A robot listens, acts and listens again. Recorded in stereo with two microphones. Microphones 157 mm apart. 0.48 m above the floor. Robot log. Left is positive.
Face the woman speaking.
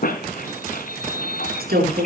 cmd yaw -90
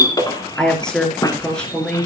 end: Facing the woman speaking.